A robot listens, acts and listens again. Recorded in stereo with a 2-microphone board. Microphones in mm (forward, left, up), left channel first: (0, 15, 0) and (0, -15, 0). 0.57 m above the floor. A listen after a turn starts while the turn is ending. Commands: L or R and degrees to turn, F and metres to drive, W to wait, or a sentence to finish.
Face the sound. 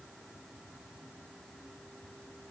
W
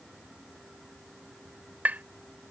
R65
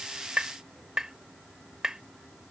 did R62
R20
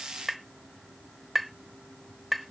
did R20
Facing the tapping.